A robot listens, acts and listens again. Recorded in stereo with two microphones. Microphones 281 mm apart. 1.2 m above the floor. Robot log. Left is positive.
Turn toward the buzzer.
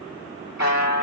note: The buzzer: about 75° left or 105° left.
cmd yaw +75
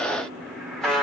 end: Found it: a buzzer, straight ahead, 1 to 2 m away.